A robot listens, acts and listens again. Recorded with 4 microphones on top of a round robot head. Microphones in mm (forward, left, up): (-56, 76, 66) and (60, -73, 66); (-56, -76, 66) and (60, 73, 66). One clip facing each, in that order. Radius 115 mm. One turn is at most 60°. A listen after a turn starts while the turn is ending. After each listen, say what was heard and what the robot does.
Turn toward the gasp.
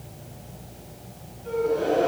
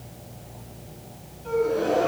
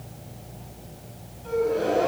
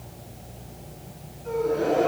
The gasp: 85° right. Turn 60° right.
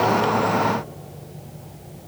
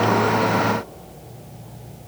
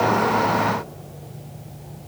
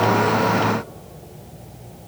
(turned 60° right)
Nothing new. It was at 25° right. Turn 25° right.
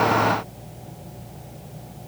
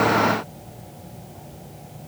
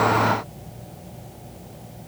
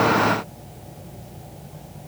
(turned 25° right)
Facing where the gasp came from. I can't hear it now.